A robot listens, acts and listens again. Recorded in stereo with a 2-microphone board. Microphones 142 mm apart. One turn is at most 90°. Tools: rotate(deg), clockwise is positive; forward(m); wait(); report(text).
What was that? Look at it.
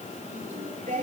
rotate(65)
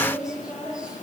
report("Found it: singing, straight ahead, over 4 m away.")